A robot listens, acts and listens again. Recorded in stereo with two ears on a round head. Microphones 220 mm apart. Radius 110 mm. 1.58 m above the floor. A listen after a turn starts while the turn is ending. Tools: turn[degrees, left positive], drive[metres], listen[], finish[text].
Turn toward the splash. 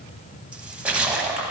Action: turn[-30]
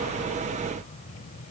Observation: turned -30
Action: listen[]
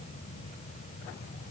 Action: finish[I heard a splash, but can't make it out now. It was about 25° left or 145° right.]